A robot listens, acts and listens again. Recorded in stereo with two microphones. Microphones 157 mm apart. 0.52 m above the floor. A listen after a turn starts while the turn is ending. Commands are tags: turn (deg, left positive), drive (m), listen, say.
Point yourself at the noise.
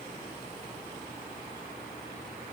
<listen/>
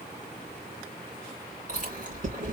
<turn deg="-55"/>
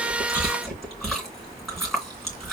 <say>Found it: chewing, straight ahead, 2 to 4 m away.</say>